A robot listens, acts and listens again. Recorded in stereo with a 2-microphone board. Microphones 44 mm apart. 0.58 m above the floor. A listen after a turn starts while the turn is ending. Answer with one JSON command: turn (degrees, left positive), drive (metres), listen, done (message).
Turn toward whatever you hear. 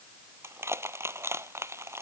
{"turn": -90}
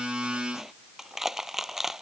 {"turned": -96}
{"turn": -10}
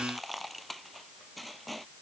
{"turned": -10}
{"done": "Found it: crushing, straight ahead."}